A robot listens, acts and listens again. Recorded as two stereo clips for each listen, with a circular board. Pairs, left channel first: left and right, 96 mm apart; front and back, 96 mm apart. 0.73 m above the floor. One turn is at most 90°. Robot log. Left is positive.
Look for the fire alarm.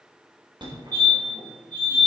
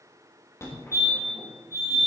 note: The fire alarm: 55° right.
cmd yaw -55
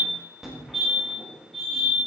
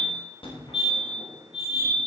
end: Found it: a fire alarm, straight ahead.